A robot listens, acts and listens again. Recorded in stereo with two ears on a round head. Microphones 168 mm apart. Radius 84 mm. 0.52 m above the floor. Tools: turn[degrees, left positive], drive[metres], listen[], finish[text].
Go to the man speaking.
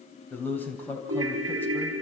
Action: turn[30]
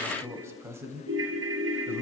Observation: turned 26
Thought: So it is at 15° right.
Action: turn[-15]
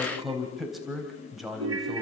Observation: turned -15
Action: drive[1.0]
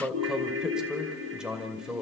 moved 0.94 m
Action: drive[1.0]
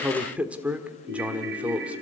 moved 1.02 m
Thought: The man speaking is now 10° right.
Action: turn[-10]
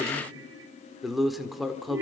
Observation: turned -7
Action: drive[1.0]
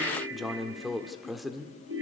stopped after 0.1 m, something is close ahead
Action: finish[Arrived at the man speaking, straight ahead.]